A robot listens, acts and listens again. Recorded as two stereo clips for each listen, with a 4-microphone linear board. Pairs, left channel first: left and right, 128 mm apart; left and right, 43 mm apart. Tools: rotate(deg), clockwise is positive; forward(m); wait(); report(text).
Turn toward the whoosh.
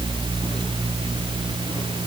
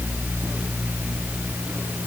wait()
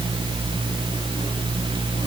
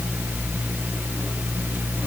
wait()
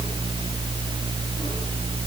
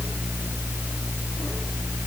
report("I can't make out a whoosh to turn to.")